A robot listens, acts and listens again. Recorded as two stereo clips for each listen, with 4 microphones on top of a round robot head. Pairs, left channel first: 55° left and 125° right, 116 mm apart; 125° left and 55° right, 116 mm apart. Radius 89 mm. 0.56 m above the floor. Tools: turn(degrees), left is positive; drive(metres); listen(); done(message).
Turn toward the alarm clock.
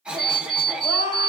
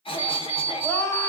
turn(degrees=95)
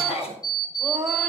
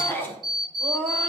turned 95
done("Facing the alarm clock, 2 to 4 m away.")